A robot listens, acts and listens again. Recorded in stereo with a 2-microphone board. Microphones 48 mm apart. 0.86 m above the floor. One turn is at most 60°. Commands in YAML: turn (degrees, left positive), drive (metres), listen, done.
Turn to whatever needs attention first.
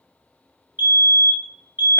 turn: -50
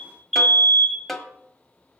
done: "Found it: a fire alarm, straight ahead, over 4 m away."